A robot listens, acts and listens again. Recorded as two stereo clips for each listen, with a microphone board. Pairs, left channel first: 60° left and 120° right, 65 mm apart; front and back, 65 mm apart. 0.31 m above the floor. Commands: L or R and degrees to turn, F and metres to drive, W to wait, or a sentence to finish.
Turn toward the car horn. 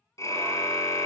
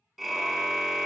L85
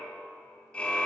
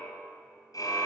R15
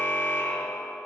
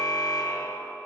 Found it: a car horn, straight ahead, 2 to 4 m away.